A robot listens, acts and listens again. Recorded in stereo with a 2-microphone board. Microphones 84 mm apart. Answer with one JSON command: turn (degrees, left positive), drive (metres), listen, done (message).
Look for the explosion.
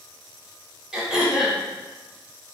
{"listen": true}
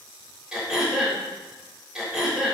{"listen": true}
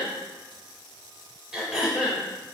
{"done": "I can't make out an explosion to turn to."}